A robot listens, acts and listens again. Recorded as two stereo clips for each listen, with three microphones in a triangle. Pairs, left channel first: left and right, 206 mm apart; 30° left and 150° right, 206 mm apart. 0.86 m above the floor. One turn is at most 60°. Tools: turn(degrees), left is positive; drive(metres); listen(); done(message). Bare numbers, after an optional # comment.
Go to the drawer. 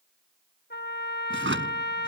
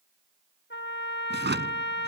# The drawer: 115° right.
turn(-60)
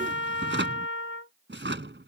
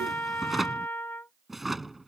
# The drawer is now 60° right.
turn(-60)
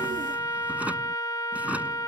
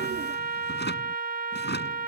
drive(1.0)
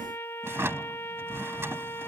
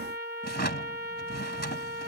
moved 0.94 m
# The drawer is now 10° right.
turn(-10)
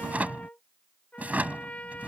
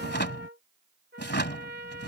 drive(1.0)
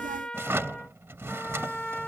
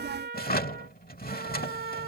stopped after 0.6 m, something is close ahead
# The drawer is now 10° right.
turn(-10)
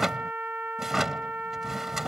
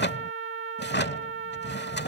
done("I am next to the drawer.")